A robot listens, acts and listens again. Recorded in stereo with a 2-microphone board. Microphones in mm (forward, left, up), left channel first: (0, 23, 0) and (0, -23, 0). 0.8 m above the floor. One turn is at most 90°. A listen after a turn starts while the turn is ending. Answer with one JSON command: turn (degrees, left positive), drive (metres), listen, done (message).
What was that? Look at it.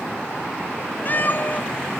{"turn": 40}
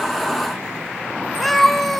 {"done": "Found it: a cat meowing, straight ahead, 1 to 2 m away."}